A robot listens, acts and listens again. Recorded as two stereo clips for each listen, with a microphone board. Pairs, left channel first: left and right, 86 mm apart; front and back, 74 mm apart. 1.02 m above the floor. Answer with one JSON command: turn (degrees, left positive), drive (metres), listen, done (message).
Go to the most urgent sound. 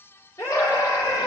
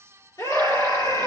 {"turn": 40}
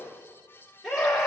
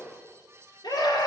{"drive": 1.0}
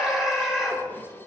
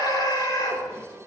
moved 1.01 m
{"drive": 1.0}
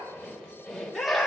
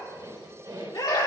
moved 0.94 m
{"drive": 1.0}
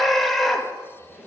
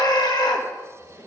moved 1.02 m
{"drive": 1.0}
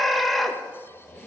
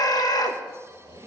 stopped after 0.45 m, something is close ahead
{"done": "I am next to the scream."}